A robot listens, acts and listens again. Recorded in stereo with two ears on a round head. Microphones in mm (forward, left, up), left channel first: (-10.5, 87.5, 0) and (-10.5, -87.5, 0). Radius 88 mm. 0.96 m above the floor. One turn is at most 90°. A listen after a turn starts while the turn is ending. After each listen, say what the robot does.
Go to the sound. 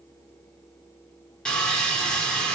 Turn 30° left.
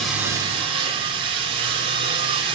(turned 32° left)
Turn 25° right.
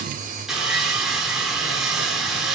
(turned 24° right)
Drive 1.0 m forward.
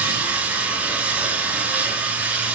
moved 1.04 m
Turn 10° right.
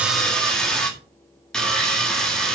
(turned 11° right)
Drive 1.0 m forward.
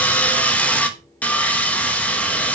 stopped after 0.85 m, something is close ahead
Turn 10° left.
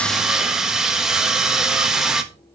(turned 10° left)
Arrived at the sawing, straight ahead.